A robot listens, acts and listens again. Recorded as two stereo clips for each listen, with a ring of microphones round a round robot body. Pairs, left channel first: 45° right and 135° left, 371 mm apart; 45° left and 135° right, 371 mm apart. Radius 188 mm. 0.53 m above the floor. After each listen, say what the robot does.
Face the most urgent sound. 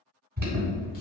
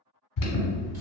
Turn 70° left.
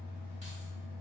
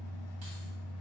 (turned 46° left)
Turn 25° left.
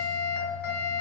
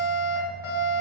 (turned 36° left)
Turn 10° right.
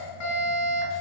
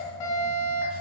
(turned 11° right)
Found it: an alarm, straight ahead, 1 to 2 m away.